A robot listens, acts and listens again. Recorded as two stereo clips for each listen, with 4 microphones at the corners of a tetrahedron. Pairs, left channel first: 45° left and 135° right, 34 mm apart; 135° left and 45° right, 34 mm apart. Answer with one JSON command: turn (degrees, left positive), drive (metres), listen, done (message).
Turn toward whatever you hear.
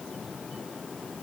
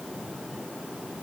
{"listen": true}
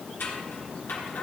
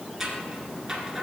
{"turn": 30}
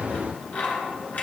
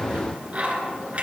{"done": "Facing the scissors, 1 to 2 m away."}